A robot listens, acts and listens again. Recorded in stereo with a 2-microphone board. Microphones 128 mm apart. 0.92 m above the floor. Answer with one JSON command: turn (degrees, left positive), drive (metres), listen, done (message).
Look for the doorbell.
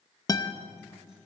{"listen": true}
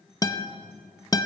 {"listen": true}
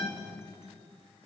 {"done": "I can't make out a doorbell, only a guitar."}